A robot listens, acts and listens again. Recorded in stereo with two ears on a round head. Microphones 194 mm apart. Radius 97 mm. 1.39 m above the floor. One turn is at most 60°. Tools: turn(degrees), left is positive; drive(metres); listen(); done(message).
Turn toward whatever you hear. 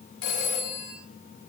turn(degrees=60)
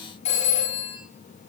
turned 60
turn(degrees=35)
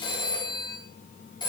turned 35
turn(degrees=20)
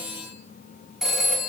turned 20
done("Found it: a phone ringing, straight ahead, over 4 m away.")